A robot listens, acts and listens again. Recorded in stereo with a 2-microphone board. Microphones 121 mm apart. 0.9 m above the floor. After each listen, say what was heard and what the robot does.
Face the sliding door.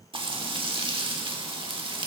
Keep listening.
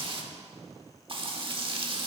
Keep listening.
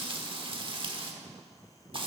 I can't make out a sliding door to turn to.